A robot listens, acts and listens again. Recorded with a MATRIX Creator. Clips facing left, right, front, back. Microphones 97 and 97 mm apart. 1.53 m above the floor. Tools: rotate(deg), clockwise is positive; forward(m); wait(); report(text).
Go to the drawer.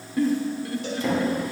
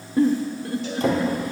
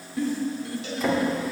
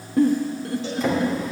rotate(90)
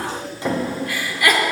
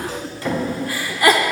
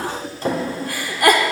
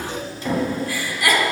rotate(-25)
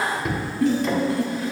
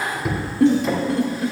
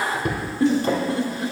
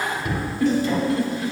forward(1.0)
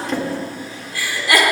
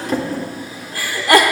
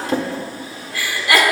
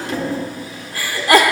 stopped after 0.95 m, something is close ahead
rotate(15)
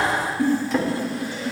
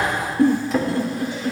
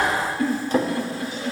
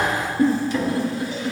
report("I am next to the drawer.")